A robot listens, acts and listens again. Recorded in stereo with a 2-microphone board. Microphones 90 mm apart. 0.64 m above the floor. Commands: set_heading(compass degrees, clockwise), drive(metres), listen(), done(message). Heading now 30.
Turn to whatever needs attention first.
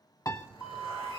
set_heading(355)
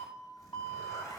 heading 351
set_heading(246)
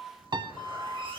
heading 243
done("Facing the alarm, over 4 m away.")